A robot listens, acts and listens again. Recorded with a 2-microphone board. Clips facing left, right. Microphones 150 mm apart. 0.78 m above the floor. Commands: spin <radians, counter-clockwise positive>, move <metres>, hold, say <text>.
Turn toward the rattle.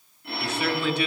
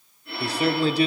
hold
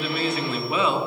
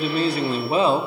hold
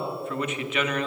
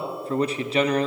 say I can't make out a rattle, only a phone ringing and a man speaking.